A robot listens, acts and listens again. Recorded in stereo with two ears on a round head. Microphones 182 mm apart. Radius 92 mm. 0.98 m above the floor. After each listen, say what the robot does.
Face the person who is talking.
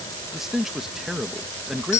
Turn 30° left.
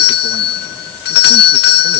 Keep listening.
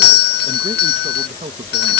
Turn 30° right.
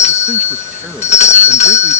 Keep listening.
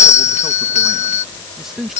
Found it: a man speaking, straight ahead.